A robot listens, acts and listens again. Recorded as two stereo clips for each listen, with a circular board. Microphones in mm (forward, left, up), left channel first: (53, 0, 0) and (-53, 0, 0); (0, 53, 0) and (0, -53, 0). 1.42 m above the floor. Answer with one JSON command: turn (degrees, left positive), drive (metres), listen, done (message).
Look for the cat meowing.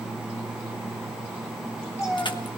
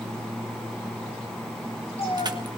{"turn": 65}
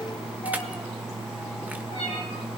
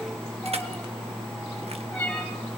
{"turn": 10}
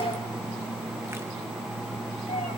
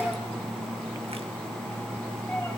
{"listen": true}
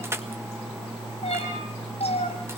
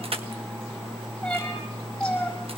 {"done": "Found it: a cat meowing, straight ahead, over 4 m away."}